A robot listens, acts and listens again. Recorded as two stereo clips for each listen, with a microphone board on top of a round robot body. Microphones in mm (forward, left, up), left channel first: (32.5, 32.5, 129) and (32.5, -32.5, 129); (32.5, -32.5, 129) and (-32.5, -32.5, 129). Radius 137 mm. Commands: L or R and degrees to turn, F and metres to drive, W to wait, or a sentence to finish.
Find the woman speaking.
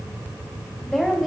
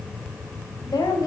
Facing the woman speaking, 1 to 2 m away.